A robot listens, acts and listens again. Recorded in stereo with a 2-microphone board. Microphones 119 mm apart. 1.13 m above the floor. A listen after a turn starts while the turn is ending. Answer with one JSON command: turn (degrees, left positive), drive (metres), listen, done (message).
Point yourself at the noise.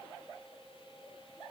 {"listen": true}
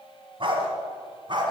{"turn": -40}
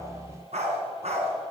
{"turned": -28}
{"turn": -115}
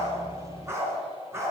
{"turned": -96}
{"turn": -20}
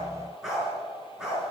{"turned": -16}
{"done": "Facing the dog barking, over 4 m away."}